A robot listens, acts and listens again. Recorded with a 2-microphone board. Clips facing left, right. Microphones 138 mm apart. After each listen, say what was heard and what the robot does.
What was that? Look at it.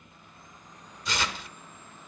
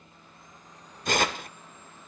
The tearing paper: about 55° right or 125° right. Turn 55° right.
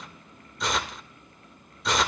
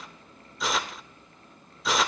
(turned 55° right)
Facing the tearing paper, 1 to 2 m away.